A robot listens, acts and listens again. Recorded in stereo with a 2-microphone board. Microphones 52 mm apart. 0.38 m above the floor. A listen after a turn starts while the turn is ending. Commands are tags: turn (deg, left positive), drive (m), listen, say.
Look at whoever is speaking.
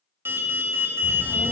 <turn deg="-30"/>
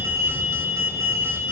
<turn deg="20"/>
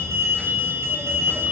<say>Found it: a child speaking, straight ahead, 1 to 2 m away.</say>